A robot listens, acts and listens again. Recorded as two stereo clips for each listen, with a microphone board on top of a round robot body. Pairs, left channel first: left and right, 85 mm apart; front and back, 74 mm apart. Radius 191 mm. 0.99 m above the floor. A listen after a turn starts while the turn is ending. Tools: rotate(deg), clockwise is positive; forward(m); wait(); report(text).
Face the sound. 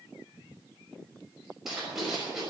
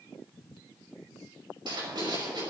rotate(175)
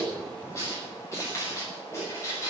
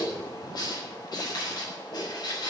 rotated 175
rotate(-30)
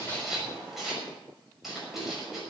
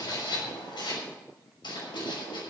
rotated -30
report("Found it: writing, straight ahead.")